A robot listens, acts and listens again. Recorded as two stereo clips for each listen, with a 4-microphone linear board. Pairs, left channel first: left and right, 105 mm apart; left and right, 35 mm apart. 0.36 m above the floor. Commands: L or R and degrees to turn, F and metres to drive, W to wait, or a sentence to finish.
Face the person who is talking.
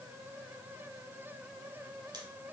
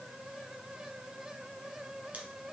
W
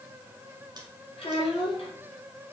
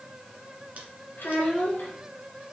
L65
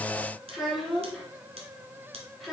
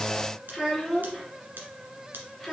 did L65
Facing the child speaking.